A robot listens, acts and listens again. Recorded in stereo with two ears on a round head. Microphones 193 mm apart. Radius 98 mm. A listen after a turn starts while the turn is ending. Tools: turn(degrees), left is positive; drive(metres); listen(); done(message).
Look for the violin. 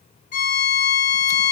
turn(degrees=35)
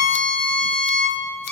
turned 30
done("Facing the violin, 1 to 2 m away.")